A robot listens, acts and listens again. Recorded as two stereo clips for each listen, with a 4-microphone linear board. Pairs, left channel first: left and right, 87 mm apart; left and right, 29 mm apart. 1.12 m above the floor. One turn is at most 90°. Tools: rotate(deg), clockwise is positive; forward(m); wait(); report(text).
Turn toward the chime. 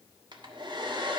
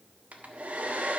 wait()
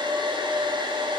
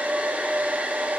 wait()
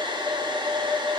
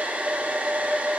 report("I can't make out a chime to turn to.")